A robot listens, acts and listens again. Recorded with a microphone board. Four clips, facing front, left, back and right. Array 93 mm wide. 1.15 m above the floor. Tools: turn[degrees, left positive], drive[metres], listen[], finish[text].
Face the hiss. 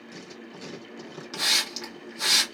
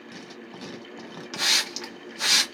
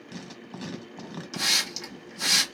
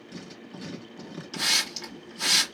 Thought: The hiss: 70° left.
Action: turn[70]
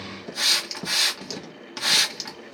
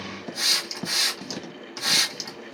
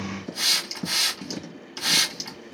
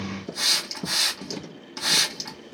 Action: finish[Found it: a hiss, straight ahead.]